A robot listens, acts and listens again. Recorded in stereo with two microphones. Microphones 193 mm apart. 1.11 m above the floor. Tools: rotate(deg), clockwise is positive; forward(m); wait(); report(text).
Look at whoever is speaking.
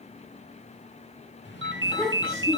rotate(-30)
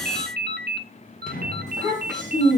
rotate(20)
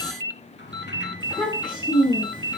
report("Found it: a child speaking, straight ahead, over 4 m away.")